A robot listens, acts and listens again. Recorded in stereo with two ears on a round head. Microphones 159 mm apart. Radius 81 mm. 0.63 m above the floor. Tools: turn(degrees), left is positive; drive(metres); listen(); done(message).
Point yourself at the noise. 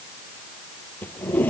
turn(degrees=30)
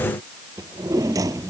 turn(degrees=-20)
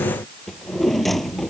done("Found it: a drawer, straight ahead.")